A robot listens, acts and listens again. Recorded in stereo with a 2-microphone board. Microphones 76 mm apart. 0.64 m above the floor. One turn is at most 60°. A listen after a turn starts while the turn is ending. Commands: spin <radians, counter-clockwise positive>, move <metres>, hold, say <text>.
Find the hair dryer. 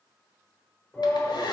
spin 1.05
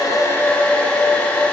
spin 0.35
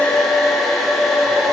say Found it: a hair dryer, straight ahead.